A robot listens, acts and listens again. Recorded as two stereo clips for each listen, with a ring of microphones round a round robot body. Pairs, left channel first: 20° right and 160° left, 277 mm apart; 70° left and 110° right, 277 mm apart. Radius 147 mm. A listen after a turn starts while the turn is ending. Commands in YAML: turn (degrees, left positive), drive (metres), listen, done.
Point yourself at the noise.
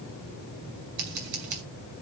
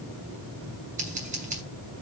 turn: 180
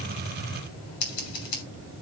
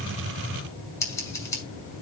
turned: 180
turn: -15
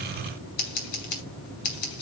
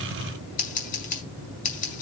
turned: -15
done: "Facing the scissors."